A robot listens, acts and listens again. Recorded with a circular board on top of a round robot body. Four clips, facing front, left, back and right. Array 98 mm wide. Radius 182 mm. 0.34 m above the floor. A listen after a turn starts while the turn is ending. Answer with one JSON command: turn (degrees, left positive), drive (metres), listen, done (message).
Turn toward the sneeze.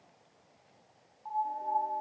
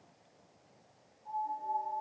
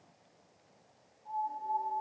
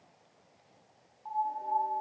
{"listen": true}
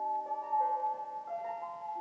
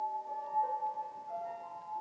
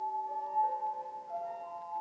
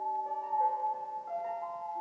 {"listen": true}
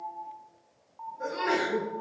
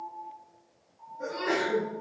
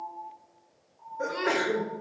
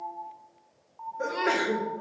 {"turn": -130}
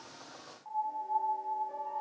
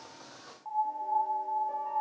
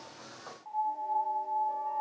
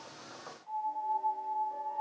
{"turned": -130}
{"done": "Facing where the sneeze came from. I can't hear it now."}